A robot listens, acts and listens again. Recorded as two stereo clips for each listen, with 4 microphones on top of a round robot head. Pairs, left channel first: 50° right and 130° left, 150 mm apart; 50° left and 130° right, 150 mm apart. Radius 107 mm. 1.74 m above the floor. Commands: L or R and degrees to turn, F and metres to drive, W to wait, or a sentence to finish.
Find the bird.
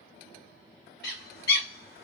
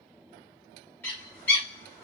R30
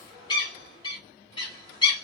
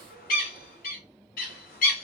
L15
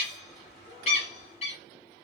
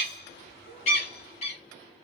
Found it: a bird, straight ahead, 1 to 2 m away.